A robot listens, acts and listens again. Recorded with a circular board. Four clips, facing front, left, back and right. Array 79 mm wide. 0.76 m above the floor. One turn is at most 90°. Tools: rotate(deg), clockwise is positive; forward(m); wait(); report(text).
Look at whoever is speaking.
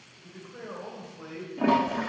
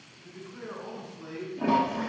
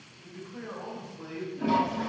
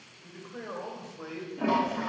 rotate(80)
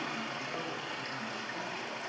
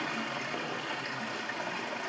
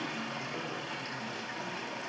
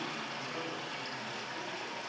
wait()
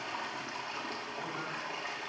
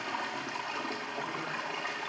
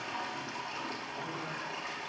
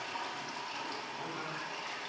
wait()
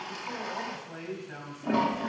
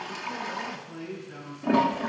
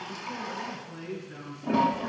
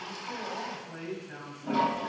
rotate(20)
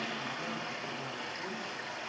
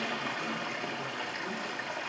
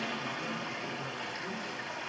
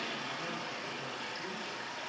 wait()
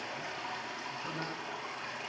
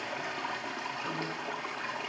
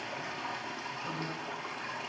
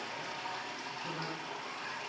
wait()
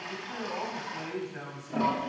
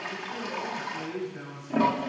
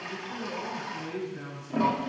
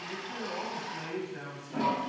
report("Facing the man speaking, 2 to 4 m away.")